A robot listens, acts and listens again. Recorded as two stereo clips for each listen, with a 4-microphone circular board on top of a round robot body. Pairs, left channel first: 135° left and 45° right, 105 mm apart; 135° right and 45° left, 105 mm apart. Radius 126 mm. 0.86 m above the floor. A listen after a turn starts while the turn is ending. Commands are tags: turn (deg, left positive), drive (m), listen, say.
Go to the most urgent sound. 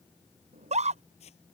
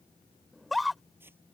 <turn deg="-45"/>
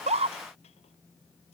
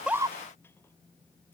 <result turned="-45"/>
<listen/>
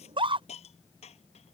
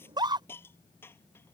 <drive m="1.0"/>
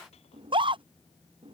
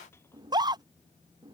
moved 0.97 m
<drive m="1.0"/>
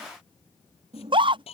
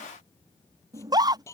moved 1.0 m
<drive m="1.0"/>
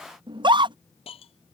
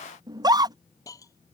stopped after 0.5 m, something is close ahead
<say>I am next to the scream.</say>